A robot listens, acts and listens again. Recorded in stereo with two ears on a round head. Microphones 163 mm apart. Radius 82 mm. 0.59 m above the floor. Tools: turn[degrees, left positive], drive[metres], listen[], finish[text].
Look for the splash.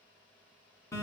Action: listen[]
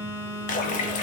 Thought: The splash: about 45° left or 135° left.
Action: turn[45]
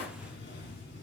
Action: listen[]
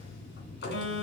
Action: finish[I heard a splash, but can't make it out now. It was about straight ahead or 90° left.]